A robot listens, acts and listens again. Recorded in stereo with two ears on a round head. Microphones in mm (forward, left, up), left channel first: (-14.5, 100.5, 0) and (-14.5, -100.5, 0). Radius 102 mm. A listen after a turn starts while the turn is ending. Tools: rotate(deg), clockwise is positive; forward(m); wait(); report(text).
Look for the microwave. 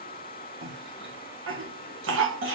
wait()
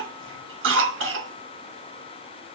wait()
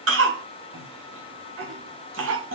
report("I can't make out a microwave, only a cough.")